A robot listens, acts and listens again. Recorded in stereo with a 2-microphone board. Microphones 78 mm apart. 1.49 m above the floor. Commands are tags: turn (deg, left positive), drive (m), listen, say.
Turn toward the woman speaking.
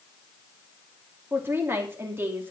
<turn deg="-25"/>
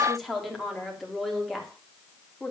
<say>Facing the woman speaking, 2 to 4 m away.</say>